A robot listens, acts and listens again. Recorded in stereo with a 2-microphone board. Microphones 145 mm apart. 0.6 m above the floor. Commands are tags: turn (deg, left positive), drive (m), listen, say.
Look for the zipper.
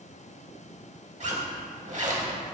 <turn deg="-55"/>
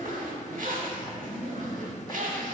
<turn deg="-75"/>
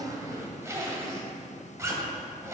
<turn deg="-20"/>
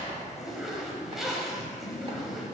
<say>Facing the zipper, under 1 m away.</say>